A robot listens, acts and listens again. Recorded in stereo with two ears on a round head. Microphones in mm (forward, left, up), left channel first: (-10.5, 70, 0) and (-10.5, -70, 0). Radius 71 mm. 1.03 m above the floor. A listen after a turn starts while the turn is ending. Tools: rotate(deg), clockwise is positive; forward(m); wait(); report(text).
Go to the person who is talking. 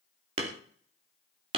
wait()
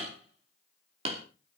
wait()
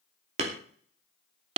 report("I can't make out anyone speaking to turn to.")